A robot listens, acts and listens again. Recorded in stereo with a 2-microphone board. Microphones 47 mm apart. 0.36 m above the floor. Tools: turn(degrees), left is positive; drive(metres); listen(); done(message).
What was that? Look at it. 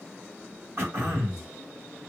turn(degrees=-60)
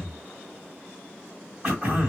turn(degrees=-20)
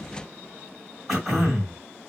done("Facing the throat clearing.")